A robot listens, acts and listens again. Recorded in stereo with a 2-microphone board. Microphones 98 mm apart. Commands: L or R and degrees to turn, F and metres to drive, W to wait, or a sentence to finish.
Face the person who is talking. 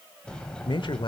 L55
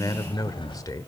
L45
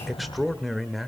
Facing the man speaking, 1 to 2 m away.